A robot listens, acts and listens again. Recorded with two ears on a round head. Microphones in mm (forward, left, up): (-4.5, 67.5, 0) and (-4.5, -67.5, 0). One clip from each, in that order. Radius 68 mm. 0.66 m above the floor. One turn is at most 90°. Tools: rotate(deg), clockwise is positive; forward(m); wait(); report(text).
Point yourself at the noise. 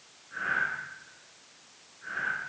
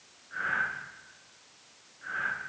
rotate(25)
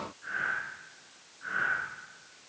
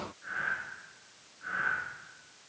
report("Facing the breathing, over 4 m away.")